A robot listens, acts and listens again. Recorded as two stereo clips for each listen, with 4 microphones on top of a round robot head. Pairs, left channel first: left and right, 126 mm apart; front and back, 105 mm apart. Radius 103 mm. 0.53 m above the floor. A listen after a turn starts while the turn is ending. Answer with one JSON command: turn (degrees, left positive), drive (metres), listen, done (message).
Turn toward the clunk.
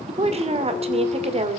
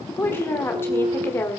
{"turn": 180}
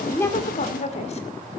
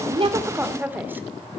{"done": "I heard a clunk from this way, but can't make it out now."}